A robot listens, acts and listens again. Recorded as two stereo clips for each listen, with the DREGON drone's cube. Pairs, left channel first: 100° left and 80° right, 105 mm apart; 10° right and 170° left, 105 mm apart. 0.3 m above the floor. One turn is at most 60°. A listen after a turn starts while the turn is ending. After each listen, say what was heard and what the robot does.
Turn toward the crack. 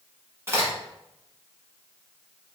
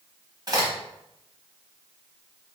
The crack: 140° right. Turn 60° right.
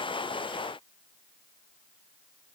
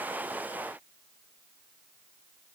Nothing new. It was at 80° right. Turn 60° right.
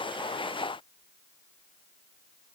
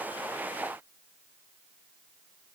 Nothing new. It was at 20° right. Turn 20° right.
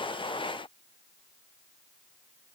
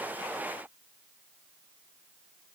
Facing where the crack came from. I can't hear it now.